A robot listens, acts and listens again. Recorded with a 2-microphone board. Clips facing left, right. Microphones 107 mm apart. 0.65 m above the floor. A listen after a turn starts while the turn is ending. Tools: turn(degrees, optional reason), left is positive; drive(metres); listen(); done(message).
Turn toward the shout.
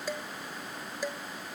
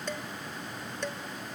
listen()
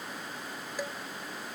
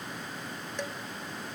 listen()
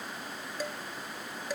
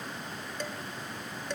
done("I can't make out a shout, only dishes clattering.")